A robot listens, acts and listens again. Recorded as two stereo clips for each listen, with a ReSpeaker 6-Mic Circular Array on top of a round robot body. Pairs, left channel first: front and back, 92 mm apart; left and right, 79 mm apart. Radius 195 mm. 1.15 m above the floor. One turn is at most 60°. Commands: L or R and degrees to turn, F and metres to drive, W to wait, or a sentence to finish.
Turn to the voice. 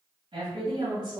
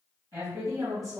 R60
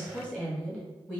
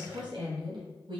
R60
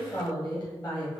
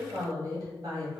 R40
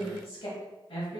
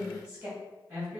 R15
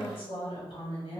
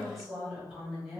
Facing the woman speaking.